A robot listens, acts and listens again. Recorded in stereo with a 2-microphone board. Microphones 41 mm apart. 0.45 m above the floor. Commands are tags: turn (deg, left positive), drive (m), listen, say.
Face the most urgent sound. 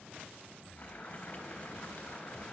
<listen/>
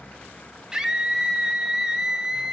<turn deg="-30"/>
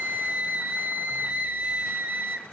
<turn deg="-135"/>
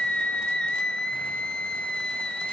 <turn deg="20"/>
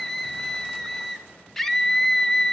<say>Facing the scream, 1 to 2 m away.</say>